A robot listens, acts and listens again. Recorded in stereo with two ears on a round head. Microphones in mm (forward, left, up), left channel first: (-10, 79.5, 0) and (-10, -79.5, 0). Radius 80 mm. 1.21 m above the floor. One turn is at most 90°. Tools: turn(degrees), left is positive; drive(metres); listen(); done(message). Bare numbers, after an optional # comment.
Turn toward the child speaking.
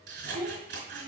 # The child speaking: about 70° right or 110° right.
turn(-70)
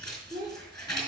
# So it is at 25° right.
turn(-25)
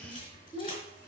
# The child speaking is now 10° left.
turn(10)
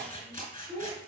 # The child speaking is now 10° left.
turn(10)
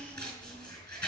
listen()
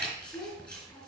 # The child speaking is now 10° left.
turn(10)
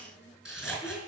listen()
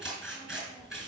listen()
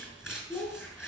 done("Found it: a child speaking, straight ahead, 2 to 4 m away.")